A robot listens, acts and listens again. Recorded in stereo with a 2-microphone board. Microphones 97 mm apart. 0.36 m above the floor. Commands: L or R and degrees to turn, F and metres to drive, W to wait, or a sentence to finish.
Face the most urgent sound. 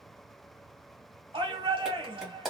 R60
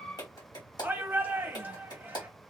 R20
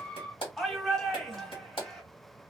Facing the shout, 1 to 2 m away.